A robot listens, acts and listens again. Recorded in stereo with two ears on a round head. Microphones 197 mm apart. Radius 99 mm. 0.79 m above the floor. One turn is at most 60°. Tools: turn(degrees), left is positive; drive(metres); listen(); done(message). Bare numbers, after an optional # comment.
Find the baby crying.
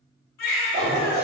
# The baby crying: about 55° left or 125° left.
turn(55)
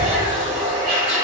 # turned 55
listen()
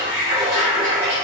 # So it is at 70° left.
turn(60)
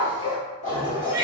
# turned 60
done("Facing the baby crying, 2 to 4 m away.")